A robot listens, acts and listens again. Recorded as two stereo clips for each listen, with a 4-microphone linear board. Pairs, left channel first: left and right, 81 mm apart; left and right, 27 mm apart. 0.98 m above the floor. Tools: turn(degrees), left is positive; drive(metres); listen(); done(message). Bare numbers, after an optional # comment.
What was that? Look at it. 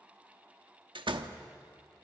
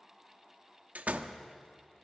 turn(-90)
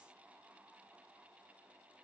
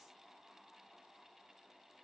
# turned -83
done("Facing where the door slam came from. I can't hear it now.")